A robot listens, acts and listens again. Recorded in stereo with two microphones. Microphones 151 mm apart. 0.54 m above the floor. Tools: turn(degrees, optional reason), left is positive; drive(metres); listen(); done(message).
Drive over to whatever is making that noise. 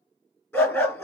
turn(degrees=30)
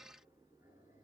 listen()
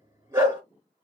turn(degrees=-20, reason="So it is at 20° right.")
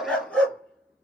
drive(metres=1.0)
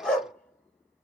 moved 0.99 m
drive(metres=1.0)
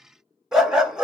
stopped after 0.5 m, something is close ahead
done("I am next to the dog barking.")